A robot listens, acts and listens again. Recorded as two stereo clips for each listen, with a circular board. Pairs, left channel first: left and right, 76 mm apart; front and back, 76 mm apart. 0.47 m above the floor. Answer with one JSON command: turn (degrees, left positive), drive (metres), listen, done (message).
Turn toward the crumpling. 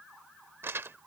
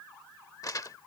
{"turn": -35}
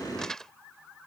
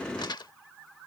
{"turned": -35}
{"turn": 10}
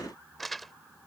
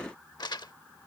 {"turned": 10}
{"done": "Facing the crumpling."}